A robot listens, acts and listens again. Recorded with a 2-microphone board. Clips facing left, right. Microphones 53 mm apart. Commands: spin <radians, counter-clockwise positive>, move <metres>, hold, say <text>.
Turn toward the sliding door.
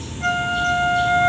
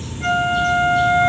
hold
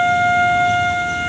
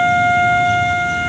hold
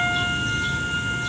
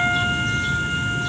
say I can't make out a sliding door, only a flute.